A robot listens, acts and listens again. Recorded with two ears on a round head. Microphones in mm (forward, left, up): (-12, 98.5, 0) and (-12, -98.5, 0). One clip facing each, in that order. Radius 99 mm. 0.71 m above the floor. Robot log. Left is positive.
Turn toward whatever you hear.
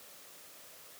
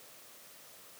cmd idle
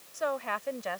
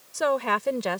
cmd yaw -90
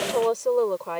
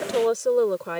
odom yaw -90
note: So it is at 20° right.
cmd yaw -20
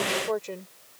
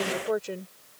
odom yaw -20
note: The woman speaking is now 15° right.
cmd yaw -15
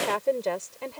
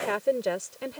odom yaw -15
note: The woman speaking is now 15° right.
cmd yaw -15
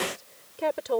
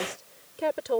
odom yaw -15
end: Found it: a woman speaking, straight ahead.